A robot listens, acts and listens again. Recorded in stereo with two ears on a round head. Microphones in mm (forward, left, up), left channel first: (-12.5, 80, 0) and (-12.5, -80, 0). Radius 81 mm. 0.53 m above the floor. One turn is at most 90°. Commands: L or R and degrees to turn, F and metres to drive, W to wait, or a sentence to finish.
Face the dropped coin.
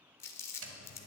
R70
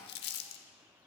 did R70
W
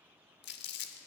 I heard a dropped coin, but can't make it out now. It was about straight ahead or 40° right.